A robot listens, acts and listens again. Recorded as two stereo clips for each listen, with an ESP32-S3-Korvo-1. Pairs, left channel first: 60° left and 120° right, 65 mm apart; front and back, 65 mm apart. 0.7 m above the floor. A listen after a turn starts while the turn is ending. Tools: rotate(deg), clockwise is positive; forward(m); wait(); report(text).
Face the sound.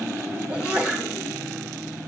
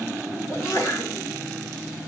rotate(45)
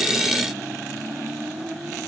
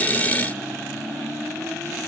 report("Facing where the sneeze came from. I can't hear it now.")